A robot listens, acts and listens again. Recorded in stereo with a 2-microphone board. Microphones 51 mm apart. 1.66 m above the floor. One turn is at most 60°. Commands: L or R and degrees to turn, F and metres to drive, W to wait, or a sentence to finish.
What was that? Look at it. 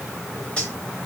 L20
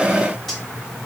Facing the cutlery clinking.